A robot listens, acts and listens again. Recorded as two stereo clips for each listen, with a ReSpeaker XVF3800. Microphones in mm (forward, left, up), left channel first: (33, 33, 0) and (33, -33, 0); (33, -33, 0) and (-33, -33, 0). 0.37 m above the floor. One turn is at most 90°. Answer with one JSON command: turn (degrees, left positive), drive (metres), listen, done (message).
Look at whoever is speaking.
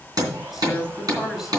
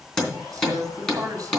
{"turn": -90}
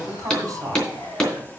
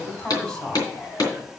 {"turn": -75}
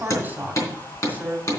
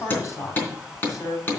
{"turn": -30}
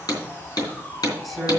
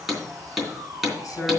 {"done": "Found it: a woman speaking, straight ahead."}